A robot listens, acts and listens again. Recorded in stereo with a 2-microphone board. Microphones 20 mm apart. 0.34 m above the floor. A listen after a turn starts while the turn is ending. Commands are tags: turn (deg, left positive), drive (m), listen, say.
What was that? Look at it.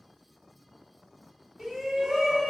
<turn deg="-40"/>
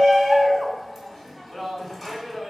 <turn deg="-15"/>
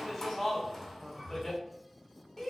<say>Facing the shout, 1 to 2 m away.</say>